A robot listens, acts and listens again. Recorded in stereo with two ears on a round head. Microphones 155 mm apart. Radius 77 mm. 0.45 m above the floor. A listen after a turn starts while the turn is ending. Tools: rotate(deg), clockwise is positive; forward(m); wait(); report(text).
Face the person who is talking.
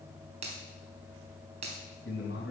rotate(-65)
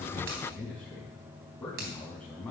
rotate(-10)
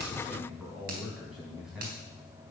report("Found it: a man speaking, straight ahead.")